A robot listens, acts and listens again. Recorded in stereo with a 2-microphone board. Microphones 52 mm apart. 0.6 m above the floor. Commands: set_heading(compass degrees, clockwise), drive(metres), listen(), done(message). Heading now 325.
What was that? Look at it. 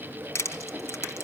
set_heading(260)
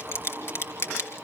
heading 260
set_heading(205)
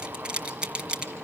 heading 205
set_heading(225)
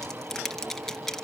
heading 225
done("Found it: crushing, straight ahead, 2 to 4 m away.")